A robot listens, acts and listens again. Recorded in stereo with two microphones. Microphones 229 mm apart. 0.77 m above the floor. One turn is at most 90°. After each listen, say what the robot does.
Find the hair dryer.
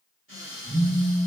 Keep listening.
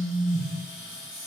Keep listening.
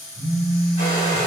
Turn 40° right.
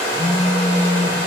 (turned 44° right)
Turn 90° right.
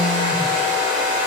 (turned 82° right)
Turn 15° right.
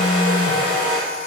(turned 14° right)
Facing the hair dryer.